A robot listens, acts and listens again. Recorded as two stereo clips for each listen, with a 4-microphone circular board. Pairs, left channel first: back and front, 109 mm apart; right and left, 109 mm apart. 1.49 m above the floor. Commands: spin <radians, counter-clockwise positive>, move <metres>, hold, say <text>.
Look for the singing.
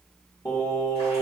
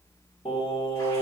spin -2.27
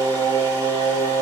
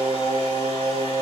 say Found it: singing, straight ahead, over 4 m away.